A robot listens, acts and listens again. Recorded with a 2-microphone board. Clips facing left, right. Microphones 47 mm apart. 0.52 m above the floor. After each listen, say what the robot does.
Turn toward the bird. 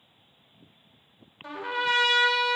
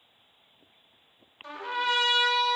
Keep listening.
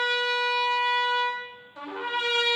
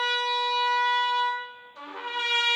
Keep listening.
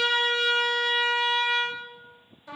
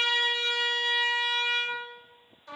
I can't make out a bird to turn to.